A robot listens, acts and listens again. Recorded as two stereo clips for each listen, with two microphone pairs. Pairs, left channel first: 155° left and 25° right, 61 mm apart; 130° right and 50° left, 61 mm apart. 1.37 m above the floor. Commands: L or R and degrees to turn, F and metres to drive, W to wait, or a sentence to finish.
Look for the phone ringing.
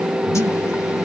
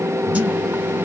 W
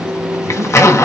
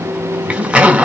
W
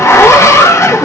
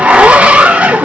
I can't make out a phone ringing to turn to.